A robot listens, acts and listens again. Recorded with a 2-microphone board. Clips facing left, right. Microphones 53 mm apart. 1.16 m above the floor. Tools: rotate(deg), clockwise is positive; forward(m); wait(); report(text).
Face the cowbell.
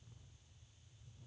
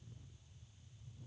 wait()
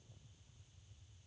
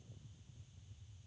wait()
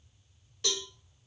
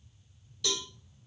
rotate(-40)
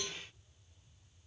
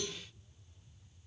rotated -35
wait()
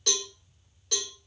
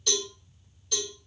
rotate(-100)
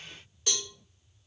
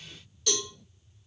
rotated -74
rotate(-30)
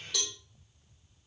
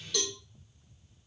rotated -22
report("Facing the cowbell.")